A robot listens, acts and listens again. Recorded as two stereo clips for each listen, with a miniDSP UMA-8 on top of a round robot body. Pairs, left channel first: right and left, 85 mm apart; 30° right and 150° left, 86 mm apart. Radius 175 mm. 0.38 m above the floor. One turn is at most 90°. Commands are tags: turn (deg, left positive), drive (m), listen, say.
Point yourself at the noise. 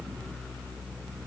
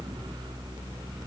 <listen/>
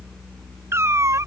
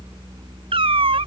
<turn deg="90"/>
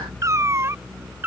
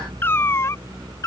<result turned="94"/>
<turn deg="25"/>
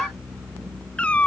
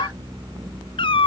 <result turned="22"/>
<turn deg="-15"/>
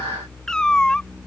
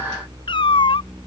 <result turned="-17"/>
<turn deg="-10"/>
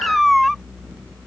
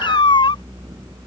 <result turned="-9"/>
<say>Facing the cat meowing.</say>